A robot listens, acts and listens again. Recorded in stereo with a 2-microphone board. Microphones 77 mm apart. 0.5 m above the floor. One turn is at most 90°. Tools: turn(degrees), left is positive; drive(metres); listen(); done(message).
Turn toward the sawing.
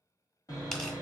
turn(degrees=45)
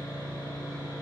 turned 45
turn(degrees=85)
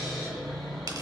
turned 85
turn(degrees=10)
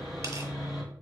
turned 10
done("Facing the sawing.")